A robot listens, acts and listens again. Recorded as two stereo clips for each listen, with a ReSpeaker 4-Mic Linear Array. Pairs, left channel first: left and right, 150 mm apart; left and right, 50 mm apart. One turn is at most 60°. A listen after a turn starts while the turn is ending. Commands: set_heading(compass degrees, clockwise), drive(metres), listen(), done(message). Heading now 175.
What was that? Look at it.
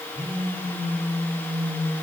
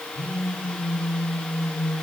set_heading(210)
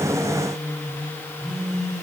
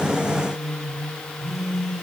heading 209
done("Found it: a phone buzzing, straight ahead.")